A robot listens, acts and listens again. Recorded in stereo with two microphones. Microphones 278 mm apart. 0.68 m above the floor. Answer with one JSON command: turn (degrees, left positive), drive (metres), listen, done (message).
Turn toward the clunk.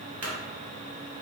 {"turn": -90}
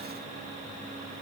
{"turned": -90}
{"done": "Facing where the clunk came from. I can't hear it now."}